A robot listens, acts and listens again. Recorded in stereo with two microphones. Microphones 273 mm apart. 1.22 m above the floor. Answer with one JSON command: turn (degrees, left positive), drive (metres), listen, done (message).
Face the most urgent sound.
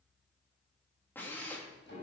{"listen": true}
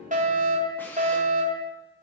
{"turn": -30}
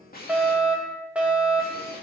{"done": "Facing the fire alarm."}